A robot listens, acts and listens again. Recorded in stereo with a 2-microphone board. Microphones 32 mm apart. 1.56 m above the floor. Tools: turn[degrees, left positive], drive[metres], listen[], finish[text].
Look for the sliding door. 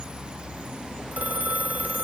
Action: listen[]
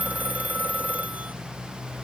Action: listen[]
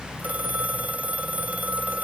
Action: finish[I can't make out a sliding door to turn to.]